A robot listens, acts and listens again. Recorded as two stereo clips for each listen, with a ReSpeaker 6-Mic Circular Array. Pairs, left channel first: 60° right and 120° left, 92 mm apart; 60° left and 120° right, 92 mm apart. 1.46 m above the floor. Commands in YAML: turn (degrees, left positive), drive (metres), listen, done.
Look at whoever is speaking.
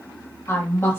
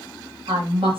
turn: -120
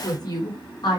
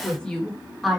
turn: -35
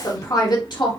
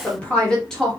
turn: -25
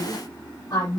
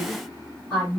turn: -20
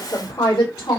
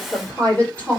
turn: -10
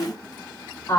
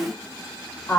done: "Facing the woman speaking, 2 to 4 m away."